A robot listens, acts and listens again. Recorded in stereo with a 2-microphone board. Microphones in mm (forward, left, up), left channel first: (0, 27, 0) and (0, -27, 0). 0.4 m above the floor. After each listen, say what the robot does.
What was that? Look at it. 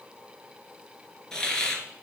Turn 30° left.
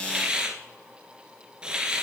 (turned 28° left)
Turn 15° right.
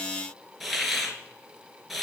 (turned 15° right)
Found it: a hiss, straight ahead, 2 to 4 m away.